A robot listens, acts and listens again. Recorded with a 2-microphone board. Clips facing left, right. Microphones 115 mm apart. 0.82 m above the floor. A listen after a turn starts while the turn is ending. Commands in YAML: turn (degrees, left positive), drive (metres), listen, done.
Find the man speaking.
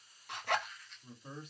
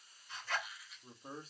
turn: -35
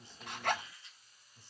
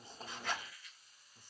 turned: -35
turn: -45
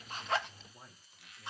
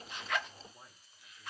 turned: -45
done: "Facing the man speaking, 1 to 2 m away."